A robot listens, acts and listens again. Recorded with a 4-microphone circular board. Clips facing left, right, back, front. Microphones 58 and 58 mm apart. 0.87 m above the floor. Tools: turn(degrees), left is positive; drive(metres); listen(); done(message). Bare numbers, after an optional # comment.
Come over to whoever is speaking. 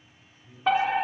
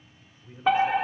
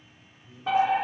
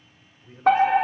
# The man speaking: 40° right.
turn(-40)
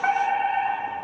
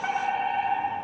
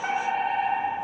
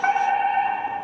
listen()
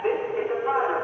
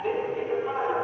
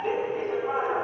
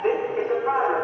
listen()
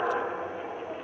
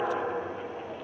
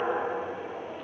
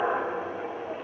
done("I heard a man speaking from this way, but can't make it out now. I did not reach it.")